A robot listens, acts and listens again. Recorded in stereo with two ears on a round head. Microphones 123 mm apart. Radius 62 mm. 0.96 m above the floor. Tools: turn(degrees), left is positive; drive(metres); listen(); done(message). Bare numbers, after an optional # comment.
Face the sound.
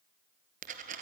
# The dropped coin: about 60° right or 120° right.
turn(-60)
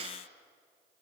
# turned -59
listen()
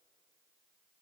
done("I heard a dropped coin, but can't make it out now. It was about straight ahead or 60° right.")